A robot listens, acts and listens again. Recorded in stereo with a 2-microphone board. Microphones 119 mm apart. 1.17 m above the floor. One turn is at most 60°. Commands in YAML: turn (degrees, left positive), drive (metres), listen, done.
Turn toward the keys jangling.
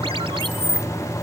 turn: 45
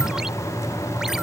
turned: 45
listen: true
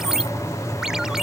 listen: true
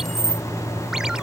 done: "Found it: keys jangling, straight ahead."